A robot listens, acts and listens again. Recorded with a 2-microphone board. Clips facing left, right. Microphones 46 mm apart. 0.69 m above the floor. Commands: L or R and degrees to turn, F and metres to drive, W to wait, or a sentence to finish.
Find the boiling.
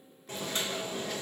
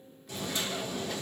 L45
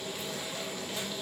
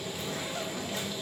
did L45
Found it: boiling, straight ahead.